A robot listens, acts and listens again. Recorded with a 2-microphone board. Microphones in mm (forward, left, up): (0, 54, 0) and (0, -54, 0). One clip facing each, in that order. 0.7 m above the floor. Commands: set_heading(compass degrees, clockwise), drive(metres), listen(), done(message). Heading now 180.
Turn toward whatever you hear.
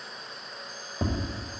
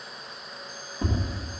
set_heading(110)
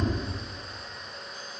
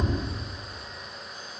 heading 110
done("Found it: tapping, straight ahead, 2 to 4 m away.")